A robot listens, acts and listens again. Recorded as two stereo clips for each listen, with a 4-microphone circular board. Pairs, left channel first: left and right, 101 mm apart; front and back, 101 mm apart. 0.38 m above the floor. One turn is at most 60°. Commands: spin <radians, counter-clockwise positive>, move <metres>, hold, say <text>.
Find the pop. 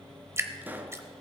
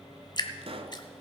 spin -1.05
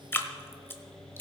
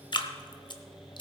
spin -1.05
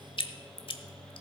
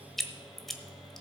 spin -0.70
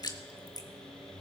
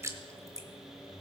say I heard a pop from this way, but can't make it out now.